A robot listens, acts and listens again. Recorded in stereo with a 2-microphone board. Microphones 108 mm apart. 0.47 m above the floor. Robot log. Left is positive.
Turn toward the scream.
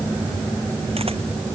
cmd idle
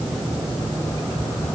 cmd idle
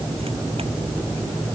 end: I can't make out a scream to turn to.